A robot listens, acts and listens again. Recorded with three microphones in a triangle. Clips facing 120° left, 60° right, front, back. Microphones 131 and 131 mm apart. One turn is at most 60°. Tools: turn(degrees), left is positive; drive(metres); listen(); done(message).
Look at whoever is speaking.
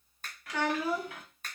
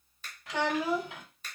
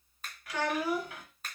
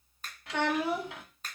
turn(degrees=-60)
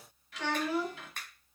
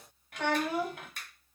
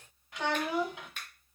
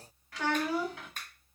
turn(degrees=-60)
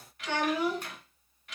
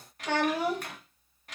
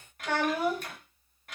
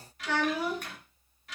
turn(degrees=-20)
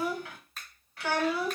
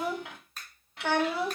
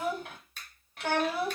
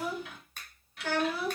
done("Found it: a child speaking, straight ahead, under 1 m away.")